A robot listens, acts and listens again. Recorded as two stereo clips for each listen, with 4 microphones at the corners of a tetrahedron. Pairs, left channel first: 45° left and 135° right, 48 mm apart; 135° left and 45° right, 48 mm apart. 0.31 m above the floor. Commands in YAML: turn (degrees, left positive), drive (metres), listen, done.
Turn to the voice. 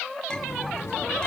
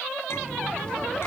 listen: true
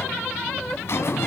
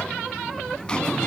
listen: true
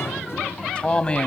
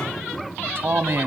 turn: -20
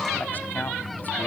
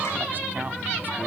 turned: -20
listen: true
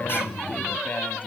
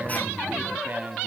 listen: true
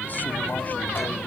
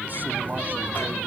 done: "Facing where the man speaking came from. I can't hear it now."